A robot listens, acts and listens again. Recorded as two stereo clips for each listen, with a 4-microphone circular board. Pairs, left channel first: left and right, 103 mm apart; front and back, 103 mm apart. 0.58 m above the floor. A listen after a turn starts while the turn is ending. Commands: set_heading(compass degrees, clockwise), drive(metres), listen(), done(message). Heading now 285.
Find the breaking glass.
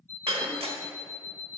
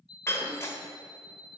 set_heading(350)
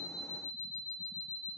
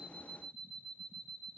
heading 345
done("I heard breaking glass from this way, but can't make it out now.")